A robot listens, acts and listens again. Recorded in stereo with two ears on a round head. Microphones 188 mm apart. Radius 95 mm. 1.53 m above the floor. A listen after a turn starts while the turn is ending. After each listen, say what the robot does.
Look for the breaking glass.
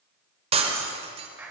Turn 30° right.
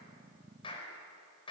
Keep listening.
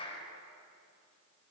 I heard breaking glass, but can't make it out now. It was about straight ahead or 120° right.